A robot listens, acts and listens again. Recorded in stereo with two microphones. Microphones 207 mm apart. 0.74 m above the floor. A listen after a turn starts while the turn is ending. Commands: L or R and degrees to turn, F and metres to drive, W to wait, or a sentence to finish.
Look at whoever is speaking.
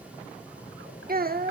R45
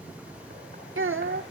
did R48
R85
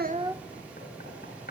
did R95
L10
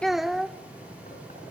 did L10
Facing the child speaking, under 1 m away.